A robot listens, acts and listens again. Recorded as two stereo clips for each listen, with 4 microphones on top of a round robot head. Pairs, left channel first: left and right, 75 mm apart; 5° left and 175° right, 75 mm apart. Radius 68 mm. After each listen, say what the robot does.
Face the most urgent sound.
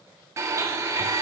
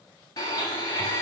Keep listening.
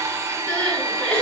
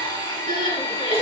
Turn 10° left.
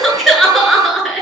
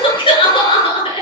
Facing the crying, over 4 m away.